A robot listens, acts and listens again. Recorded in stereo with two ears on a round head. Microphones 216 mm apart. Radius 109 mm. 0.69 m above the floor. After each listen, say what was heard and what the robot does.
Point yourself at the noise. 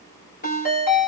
The ringtone: about 35° left or 145° left. Turn 35° left.
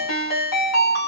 So it is at 105° left. Turn 105° left.
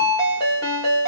The ringtone is now 15° left. Turn 15° left.
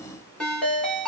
Found it: a ringtone, straight ahead, 1 to 2 m away.